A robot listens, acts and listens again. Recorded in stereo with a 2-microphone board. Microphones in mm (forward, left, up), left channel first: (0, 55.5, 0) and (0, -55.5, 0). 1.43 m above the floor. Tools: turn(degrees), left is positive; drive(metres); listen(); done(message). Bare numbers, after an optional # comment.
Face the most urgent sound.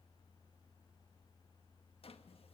listen()
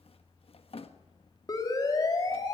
# The siren: about 35° left or 145° left.
turn(35)
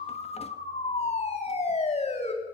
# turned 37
# So it is at 110° left.
turn(110)
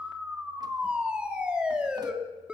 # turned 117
# The siren is now 10° right.
turn(-10)
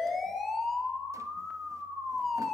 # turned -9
done("Found it: a siren, straight ahead, 2 to 4 m away.")